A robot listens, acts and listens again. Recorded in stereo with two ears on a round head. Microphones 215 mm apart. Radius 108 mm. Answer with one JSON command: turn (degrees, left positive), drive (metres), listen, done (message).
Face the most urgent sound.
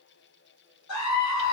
{"turn": 90}
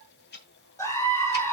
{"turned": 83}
{"turn": 15}
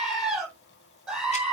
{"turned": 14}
{"done": "Facing the scream, over 4 m away."}